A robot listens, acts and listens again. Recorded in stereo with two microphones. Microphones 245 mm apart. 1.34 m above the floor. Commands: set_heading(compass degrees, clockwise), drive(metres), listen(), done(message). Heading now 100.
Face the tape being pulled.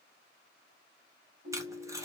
set_heading(130)
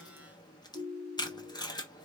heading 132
set_heading(112)
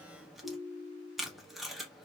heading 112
done("Found it: tape being pulled, straight ahead.")